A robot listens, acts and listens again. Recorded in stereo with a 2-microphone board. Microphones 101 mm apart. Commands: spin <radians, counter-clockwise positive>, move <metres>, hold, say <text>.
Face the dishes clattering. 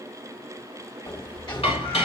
spin 1.57
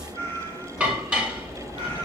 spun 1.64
spin -0.17
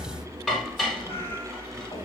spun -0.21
say Found it: dishes clattering, straight ahead, over 4 m away.